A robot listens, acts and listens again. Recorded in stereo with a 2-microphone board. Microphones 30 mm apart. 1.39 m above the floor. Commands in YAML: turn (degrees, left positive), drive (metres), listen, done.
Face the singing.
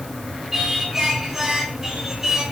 turn: -25
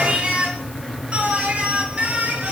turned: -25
turn: -125
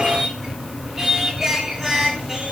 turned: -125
turn: -10
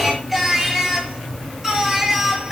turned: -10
done: "Facing the singing, over 4 m away."